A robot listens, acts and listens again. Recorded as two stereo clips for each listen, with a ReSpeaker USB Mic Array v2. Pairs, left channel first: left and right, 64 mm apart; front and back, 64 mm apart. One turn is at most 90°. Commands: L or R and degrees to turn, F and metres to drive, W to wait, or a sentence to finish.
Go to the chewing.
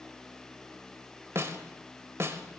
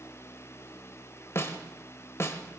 W
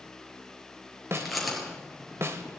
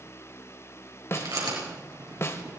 L90
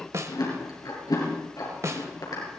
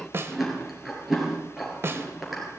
L90
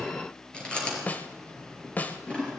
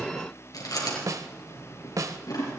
L15
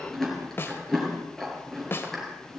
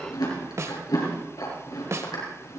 F1.0
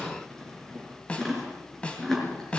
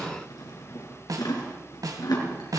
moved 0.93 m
F1.0
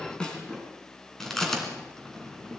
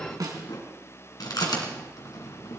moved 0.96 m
F1.0
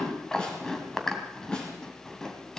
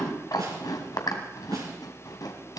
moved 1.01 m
F1.0
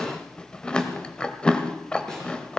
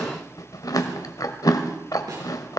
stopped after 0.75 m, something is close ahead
L15
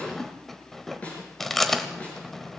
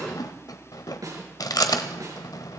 Arrived at the chewing, straight ahead.